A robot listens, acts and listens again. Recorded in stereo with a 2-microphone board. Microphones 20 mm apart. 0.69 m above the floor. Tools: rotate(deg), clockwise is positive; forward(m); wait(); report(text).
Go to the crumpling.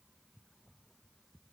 wait()
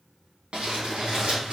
rotate(90)
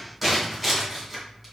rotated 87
forward(1.0)
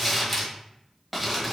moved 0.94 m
rotate(-10)
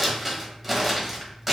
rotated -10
forward(1.0)
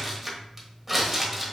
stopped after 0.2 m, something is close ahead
report("Arrived at the crumpling, straight ahead.")